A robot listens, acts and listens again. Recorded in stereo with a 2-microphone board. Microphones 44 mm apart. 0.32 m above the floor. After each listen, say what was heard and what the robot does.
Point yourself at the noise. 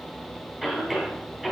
Turn 30° right.
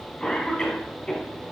So it is at 20° left. Turn 20° left.
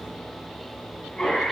Facing the cough, 2 to 4 m away.